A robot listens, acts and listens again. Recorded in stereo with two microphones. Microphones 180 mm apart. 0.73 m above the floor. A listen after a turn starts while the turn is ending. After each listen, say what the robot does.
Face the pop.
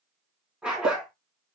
Turn 50° right.
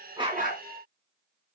Keep listening.
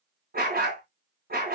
I heard a pop, but can't make it out now. It was about straight ahead or 80° right.